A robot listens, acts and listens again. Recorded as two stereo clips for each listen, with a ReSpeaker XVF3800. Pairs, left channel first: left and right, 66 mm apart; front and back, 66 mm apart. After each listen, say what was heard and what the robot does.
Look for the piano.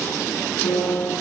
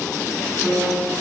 The piano: 85° left. Turn 85° left.
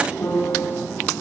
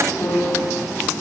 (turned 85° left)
The piano is now 40° left. Turn 40° left.
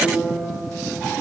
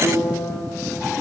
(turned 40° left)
Facing the piano.